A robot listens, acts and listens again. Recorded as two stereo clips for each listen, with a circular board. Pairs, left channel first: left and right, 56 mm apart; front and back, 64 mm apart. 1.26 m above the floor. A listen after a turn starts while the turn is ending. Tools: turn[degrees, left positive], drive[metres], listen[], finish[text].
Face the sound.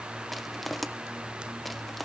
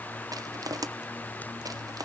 Thought: The crushing: straight behind.
Action: turn[180]
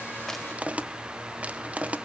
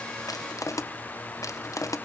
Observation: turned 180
Thought: The crushing is now 25° right.
Action: turn[-25]
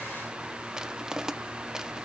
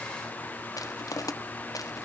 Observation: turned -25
Thought: The crushing is now 10° right.
Action: turn[-10]
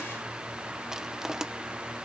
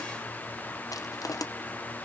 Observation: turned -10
Thought: The crushing is now 10° right.
Action: turn[-10]
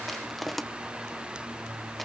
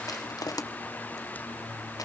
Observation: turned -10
Action: finish[Found it: crushing, straight ahead, 1 to 2 m away.]